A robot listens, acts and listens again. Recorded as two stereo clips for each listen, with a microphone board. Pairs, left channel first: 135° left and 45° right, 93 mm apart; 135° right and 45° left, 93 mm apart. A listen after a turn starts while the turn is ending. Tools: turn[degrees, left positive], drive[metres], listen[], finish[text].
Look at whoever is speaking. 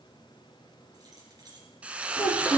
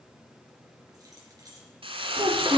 Thought: The child speaking: 100° left.
Action: turn[100]
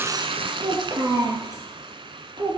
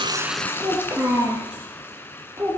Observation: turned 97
Thought: The child speaking is now 10° right.
Action: turn[-10]
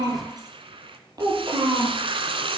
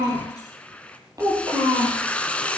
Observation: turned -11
Action: finish[Facing the child speaking.]